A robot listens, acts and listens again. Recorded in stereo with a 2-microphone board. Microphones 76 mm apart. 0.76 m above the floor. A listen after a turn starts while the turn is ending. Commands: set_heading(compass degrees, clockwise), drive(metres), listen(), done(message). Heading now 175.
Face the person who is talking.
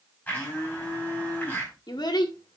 set_heading(105)
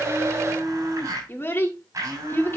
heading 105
set_heading(70)
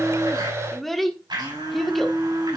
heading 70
done("Found it: a child speaking, straight ahead.")